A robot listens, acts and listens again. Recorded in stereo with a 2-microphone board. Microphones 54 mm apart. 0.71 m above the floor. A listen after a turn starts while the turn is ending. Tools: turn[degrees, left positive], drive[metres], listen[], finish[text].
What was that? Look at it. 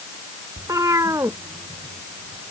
Action: turn[-90]
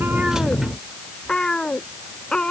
Thought: So it is at 15° left.
Action: turn[15]
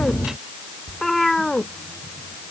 Action: finish[Facing the cat meowing.]